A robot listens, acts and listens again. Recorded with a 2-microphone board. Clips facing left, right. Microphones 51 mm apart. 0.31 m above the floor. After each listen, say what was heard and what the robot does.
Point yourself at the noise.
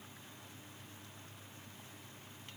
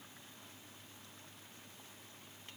Keep listening.
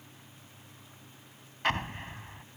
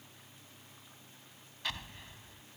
The explosion: about 50° left or 130° left. Turn 50° left.
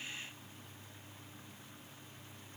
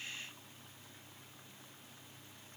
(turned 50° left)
Keep listening.
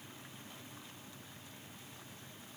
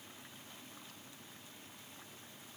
I heard an explosion, but can't make it out now. It was about straight ahead or 80° left.